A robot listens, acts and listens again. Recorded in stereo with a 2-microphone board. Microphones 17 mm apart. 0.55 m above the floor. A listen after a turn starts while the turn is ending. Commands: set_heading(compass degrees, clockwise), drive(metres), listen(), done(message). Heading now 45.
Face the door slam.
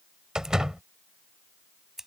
set_heading(85)
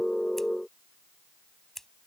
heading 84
listen()
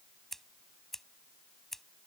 done("I heard a door slam, but can't make it out now. It was about straight ahead or 100° right.")